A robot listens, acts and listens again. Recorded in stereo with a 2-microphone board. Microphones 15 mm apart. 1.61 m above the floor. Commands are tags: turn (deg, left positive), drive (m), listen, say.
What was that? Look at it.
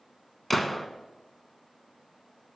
<turn deg="30"/>
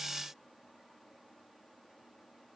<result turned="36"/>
<listen/>
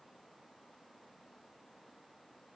<say>I heard a gunshot, but can't make it out now. It was about 30° right or 140° left.</say>